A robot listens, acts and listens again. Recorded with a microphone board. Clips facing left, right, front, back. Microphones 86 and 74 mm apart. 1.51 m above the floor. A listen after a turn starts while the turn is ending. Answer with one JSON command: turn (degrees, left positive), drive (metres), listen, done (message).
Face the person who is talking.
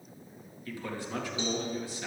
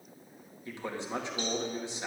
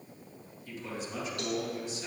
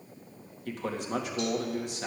{"turn": -155}
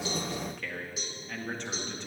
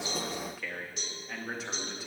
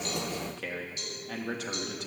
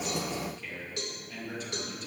{"done": "Facing the man speaking, 2 to 4 m away."}